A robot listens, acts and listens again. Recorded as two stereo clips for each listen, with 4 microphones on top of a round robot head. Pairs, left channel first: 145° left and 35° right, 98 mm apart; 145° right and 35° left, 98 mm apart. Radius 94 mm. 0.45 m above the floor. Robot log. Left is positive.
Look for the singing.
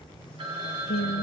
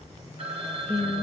note: The singing: 125° left.
cmd yaw +125
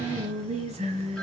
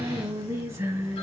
note: The singing is now 35° right.
cmd yaw -35
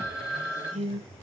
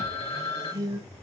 note: The singing is now 25° right.
cmd yaw -25
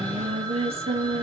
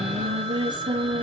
note: The singing is now 10° right.
cmd yaw -10
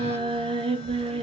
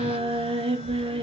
end: Found it: singing, straight ahead, 2 to 4 m away.